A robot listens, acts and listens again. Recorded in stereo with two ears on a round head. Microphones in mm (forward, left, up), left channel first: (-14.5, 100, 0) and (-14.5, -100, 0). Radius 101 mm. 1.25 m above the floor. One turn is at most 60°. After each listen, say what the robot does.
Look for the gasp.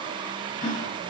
Turn 35° left.
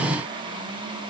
Keep listening.
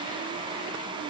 I heard a gasp, but can't make it out now. It was about straight ahead or 110° left.